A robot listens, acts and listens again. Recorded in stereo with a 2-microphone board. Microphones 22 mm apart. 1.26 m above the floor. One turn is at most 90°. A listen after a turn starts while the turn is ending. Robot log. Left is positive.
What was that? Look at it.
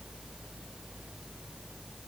cmd idle
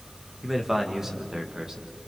note: The man speaking: about 30° right or 150° right.
cmd yaw -30
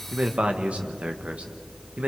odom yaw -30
note: So it is at 105° right.
cmd yaw -90
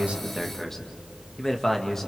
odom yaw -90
note: The man speaking is now 20° left.
cmd yaw +20
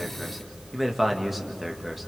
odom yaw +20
end: Facing the man speaking, 1 to 2 m away.